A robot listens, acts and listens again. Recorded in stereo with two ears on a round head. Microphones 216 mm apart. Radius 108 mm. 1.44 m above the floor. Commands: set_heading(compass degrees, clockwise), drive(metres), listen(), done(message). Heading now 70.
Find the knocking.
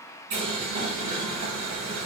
listen()
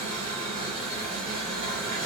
listen()
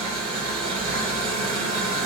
done("I can't make out knocking, only boiling.")